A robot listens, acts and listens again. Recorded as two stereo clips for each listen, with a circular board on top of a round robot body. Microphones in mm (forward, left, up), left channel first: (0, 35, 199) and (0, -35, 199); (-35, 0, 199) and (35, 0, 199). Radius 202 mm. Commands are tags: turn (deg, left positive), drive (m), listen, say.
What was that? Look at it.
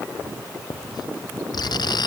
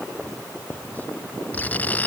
<turn deg="110"/>
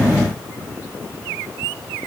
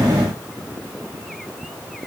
<listen/>
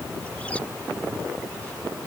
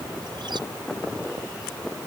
<listen/>
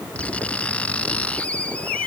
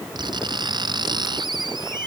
<turn deg="15"/>
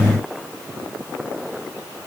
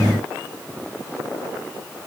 <listen/>
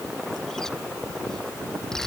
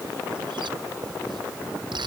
<say>Facing the writing.</say>